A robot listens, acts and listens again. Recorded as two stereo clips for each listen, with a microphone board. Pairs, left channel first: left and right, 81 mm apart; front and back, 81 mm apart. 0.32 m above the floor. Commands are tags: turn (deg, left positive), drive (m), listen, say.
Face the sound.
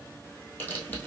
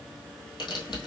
<turn deg="25"/>
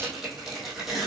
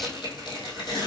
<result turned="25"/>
<say>Facing the tearing paper.</say>